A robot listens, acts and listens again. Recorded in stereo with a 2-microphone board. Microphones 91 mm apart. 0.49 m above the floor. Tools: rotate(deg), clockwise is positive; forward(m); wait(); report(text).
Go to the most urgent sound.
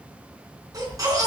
rotate(40)
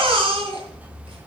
rotate(100)
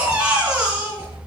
rotate(15)
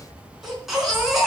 forward(1.0)
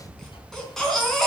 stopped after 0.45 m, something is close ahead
report("Blocked. The baby crying is further on, straight ahead.")